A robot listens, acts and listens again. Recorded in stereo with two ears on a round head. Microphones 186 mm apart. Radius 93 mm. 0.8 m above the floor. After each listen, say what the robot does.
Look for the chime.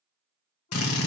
Keep listening.
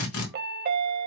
Turn 45° right.
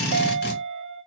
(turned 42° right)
Turn 85° right.
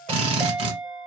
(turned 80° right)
Facing the chime, under 1 m away.